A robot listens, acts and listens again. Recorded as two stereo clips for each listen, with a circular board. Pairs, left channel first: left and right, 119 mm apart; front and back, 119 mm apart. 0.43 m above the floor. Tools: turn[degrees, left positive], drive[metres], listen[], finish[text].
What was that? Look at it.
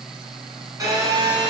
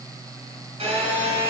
Thought: The phone buzzing: 150° right.
Action: turn[-150]
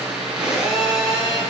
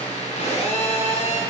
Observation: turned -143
Thought: The phone buzzing is now 10° right.
Action: turn[-10]
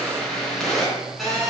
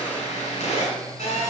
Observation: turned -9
Action: finish[Facing the phone buzzing, 2 to 4 m away.]